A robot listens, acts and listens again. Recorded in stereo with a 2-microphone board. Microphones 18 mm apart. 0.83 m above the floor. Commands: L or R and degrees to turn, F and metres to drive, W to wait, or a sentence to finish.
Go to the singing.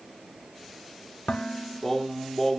L30
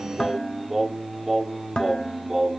R15
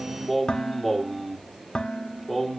F1.0
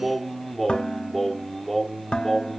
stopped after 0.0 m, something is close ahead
Something is in my way. I am facing the singing but have not reached it.